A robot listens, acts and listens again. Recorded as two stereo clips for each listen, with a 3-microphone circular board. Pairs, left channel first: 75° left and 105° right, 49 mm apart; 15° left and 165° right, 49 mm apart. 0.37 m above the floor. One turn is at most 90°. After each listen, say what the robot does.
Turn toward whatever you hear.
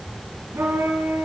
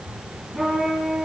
Turn 80° right.
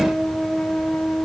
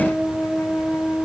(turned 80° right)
Turn 10° left.
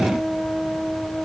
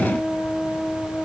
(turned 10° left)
Found it: a trumpet, straight ahead.